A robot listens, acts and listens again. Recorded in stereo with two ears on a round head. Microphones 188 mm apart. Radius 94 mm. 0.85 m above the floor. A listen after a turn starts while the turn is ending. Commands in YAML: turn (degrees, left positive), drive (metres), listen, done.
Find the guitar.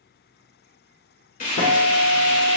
turn: 65
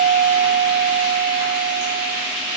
turn: 50
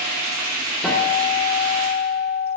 done: "Facing the guitar."